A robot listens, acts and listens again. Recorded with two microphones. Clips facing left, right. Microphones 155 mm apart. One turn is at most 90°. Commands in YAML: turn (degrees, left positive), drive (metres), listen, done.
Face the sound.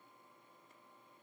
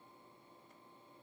listen: true
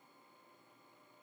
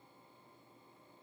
listen: true
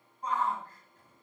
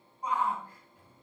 turn: -30
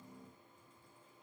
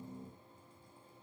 listen: true
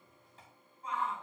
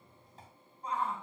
turn: -90
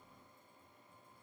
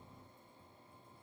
turn: -45
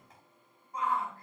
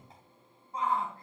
turn: -30
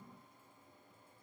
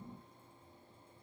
listen: true
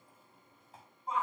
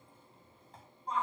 done: "Found it: a shout, straight ahead."